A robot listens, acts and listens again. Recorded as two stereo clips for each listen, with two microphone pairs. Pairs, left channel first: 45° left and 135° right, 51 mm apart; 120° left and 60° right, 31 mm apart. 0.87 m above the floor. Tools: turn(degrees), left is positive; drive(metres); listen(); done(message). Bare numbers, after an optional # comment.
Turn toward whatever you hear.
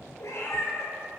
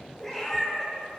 # The cat meowing: 45° left.
turn(45)
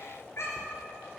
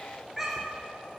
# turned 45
# The cat meowing is now 20° left.
turn(20)
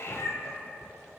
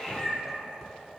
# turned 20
# The cat meowing is now 20° left.
turn(20)
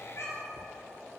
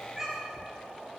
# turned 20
# The cat meowing is now 15° left.
turn(15)
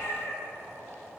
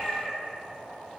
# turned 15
# The cat meowing is now 15° left.
turn(15)
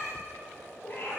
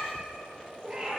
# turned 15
done("Found it: a cat meowing, straight ahead, 2 to 4 m away.")